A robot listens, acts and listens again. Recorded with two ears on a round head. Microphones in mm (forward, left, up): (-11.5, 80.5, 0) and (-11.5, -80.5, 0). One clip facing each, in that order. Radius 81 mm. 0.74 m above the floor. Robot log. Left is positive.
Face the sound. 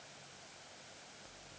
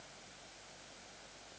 cmd idle
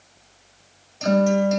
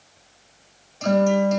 cmd yaw +30
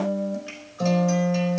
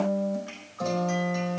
note: So it is at 145° left.
cmd yaw +145
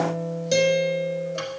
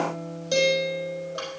note: The guitar is now 20° left.
cmd yaw +20
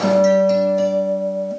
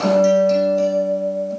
end: Found it: a guitar, straight ahead, over 4 m away.